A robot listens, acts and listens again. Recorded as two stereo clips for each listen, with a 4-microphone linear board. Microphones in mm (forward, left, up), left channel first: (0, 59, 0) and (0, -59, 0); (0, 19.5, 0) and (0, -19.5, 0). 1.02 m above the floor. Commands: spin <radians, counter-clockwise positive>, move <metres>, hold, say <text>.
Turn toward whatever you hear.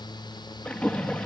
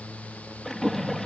spin 0.52
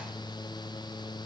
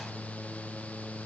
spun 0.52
hold
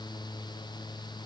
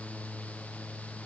say I heard a splash, but can't make it out now. It was about 20° right or 140° left.